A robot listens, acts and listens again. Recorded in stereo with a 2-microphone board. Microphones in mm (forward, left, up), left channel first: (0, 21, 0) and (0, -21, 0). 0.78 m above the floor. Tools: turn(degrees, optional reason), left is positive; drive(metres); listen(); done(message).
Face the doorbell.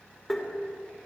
listen()
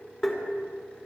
listen()
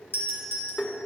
turn(degrees=70, reason="The doorbell: about 70° left or 110° left.")
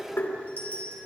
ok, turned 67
turn(degrees=40, reason="So it is at 40° left.")
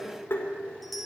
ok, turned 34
done("Found it: a doorbell, straight ahead, over 4 m away.")